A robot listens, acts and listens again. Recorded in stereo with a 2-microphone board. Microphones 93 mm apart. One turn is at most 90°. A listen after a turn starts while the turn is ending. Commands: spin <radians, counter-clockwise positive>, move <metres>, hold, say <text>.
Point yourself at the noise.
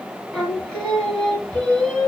spin 0.52
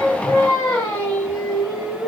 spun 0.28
spin 1.57
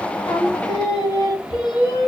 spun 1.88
spin 0.96
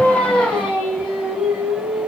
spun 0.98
say Found it: singing, straight ahead.